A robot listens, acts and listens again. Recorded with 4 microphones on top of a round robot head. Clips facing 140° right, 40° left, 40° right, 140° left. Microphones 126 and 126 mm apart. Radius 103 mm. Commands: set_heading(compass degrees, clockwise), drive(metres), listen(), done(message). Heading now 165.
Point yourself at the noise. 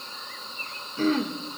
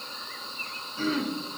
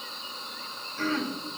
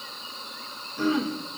set_heading(315)
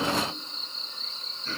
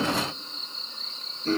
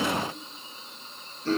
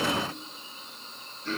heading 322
done("Found it: throat clearing, straight ahead, 1 to 2 m away.")